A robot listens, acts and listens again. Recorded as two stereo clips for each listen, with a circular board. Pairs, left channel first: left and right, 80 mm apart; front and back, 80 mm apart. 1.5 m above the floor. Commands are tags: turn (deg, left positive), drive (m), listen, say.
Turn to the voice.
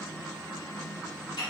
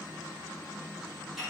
<listen/>
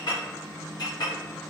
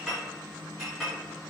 <listen/>
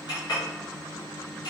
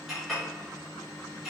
<say>I can't make out anyone speaking to turn to.</say>